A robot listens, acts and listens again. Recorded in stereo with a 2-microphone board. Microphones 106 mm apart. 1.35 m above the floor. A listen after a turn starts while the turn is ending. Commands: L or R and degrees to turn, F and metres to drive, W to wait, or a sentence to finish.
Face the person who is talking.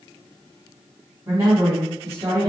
R30
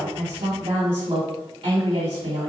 R125
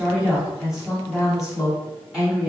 Found it: a woman speaking, straight ahead.